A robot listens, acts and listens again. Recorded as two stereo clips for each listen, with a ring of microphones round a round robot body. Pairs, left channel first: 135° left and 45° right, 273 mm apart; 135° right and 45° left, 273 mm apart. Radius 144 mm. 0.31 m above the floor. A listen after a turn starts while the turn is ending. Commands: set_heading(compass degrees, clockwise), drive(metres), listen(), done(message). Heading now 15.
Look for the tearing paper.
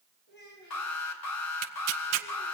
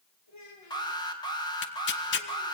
set_heading(95)
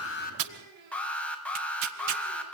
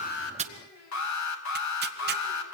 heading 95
listen()
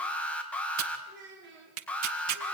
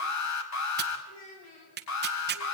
set_heading(105)
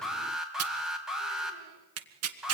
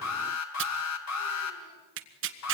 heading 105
done("Facing the tearing paper, 1 to 2 m away.")